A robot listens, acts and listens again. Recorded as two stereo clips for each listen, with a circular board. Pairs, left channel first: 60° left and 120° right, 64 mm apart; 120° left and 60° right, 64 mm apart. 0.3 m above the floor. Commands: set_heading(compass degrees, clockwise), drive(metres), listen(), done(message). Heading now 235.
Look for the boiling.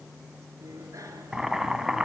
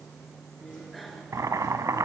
set_heading(275)
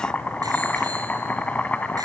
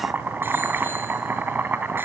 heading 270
done("Found it: boiling, straight ahead.")